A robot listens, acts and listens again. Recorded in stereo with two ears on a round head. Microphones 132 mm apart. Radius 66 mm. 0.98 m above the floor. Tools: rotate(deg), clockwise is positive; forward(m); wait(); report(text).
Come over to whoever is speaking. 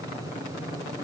wait()
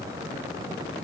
wait()
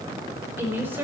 rotate(15)
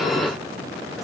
wait()
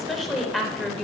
forward(1.0)
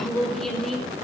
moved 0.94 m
forward(1.0)
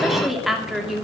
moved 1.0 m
forward(1.0)
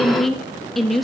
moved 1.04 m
forward(1.0)
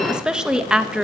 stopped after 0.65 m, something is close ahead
report("Arrived at the woman speaking, straight ahead.")